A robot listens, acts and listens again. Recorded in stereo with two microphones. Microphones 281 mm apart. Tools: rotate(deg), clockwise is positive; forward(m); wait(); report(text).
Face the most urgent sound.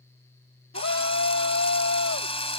rotate(-55)
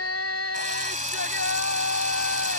rotate(-65)
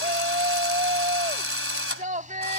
rotate(30)
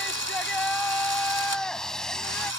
report("Facing the shout.")